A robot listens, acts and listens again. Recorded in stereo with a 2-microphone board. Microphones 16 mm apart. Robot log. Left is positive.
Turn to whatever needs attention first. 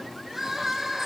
note: The crying: about 30° right or 150° right.
cmd yaw -30
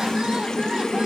cmd idle
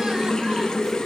cmd idle
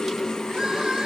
end: I heard crying, but can't make it out now. It was about straight ahead or 120° right.